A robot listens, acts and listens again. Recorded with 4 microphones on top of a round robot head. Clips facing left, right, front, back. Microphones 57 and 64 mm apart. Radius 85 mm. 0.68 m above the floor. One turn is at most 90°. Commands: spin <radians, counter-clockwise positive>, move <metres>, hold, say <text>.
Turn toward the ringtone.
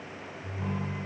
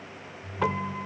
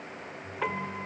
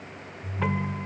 spin 1.57
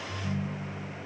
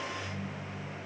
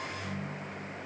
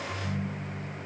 spin 1.57
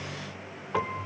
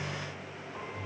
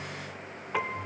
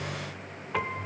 say Found it: a ringtone, straight ahead, 2 to 4 m away.